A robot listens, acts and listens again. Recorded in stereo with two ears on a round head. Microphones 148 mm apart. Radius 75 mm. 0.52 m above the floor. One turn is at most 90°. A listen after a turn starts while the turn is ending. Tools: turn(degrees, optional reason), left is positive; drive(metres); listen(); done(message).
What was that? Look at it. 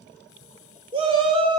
turn(degrees=-30, reason="The shout: about 30° right or 150° right.")
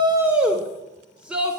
done("Found it: a shout, straight ahead, 1 to 2 m away.")